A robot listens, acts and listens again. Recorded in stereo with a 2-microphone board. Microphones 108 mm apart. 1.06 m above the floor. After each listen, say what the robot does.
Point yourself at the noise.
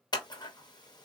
Turn 40° left.
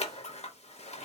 Turn 100° left.
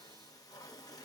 Keep listening.
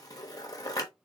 Turn 35° left.
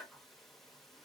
Found it: scissors, straight ahead, under 1 m away.